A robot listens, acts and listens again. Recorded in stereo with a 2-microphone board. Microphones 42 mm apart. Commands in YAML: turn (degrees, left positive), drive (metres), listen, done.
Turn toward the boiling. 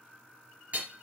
listen: true
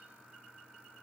listen: true
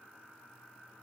done: "I can't make out boiling, only hammering."